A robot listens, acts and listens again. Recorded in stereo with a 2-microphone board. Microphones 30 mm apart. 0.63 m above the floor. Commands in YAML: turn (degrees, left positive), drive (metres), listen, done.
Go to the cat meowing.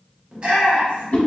listen: true
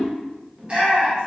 listen: true
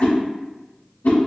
done: "I can't make out a cat meowing, only a whoosh and a shout."